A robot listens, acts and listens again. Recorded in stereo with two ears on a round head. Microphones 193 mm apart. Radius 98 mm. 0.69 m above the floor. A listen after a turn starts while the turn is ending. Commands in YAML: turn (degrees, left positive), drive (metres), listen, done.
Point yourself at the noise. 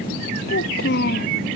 turn: 45
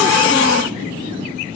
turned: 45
listen: true
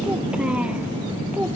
done: "Found it: a child speaking, straight ahead."